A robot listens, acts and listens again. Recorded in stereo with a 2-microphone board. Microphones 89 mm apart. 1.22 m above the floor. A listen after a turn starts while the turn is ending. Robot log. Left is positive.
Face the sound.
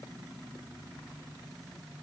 cmd idle
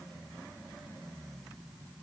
cmd idle
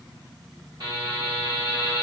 note: The buzzer: about 55° right or 125° right.
cmd yaw -55
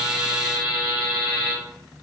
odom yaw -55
note: So it is at 55° right.
cmd yaw -55
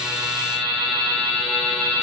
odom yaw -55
end: Found it: a buzzer, straight ahead, 1 to 2 m away.